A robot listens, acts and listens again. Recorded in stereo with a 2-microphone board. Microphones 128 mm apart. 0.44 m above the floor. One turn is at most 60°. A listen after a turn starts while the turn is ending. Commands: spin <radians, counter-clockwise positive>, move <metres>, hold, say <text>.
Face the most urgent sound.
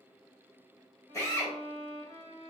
hold
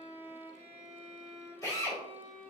hold
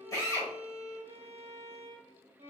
say I can't make out anything urgent to turn to.